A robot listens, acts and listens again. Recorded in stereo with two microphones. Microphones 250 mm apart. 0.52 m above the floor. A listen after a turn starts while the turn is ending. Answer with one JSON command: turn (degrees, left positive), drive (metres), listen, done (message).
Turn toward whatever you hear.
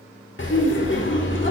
{"turn": 50}
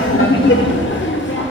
{"turn": 65}
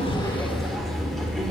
{"done": "Facing the laughter."}